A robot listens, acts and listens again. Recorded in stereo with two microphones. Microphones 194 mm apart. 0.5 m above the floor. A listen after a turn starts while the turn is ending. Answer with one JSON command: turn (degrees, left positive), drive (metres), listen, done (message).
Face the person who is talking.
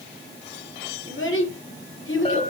{"turn": 75}
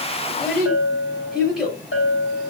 {"done": "Facing the child speaking."}